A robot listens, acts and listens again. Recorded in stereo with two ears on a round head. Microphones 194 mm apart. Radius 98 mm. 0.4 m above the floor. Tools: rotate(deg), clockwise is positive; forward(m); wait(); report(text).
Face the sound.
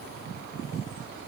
wait()
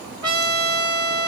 rotate(20)
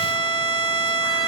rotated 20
report("Found it: a trumpet, straight ahead, 1 to 2 m away.")